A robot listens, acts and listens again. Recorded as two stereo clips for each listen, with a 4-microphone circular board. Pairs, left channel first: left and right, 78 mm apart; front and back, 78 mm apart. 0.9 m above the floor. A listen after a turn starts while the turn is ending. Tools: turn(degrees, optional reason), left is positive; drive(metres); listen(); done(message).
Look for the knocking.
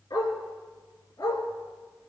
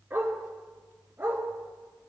listen()
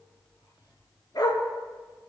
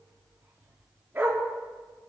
listen()
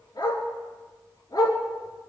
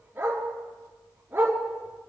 done("I can't make out knocking to turn to.")